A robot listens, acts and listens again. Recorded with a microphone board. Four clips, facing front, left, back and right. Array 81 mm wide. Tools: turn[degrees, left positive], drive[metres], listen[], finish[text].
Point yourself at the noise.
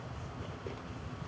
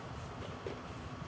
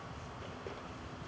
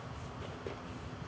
Action: listen[]
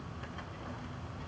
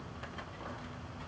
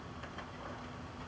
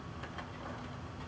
Action: listen[]
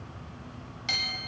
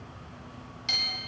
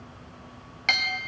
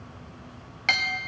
Thought: The clink: 125° right.
Action: turn[-125]
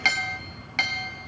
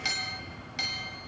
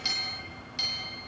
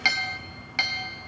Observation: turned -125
Thought: The clink is now 35° right.
Action: turn[-35]
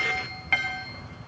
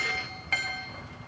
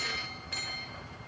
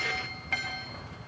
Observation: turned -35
Action: finish[Facing the clink.]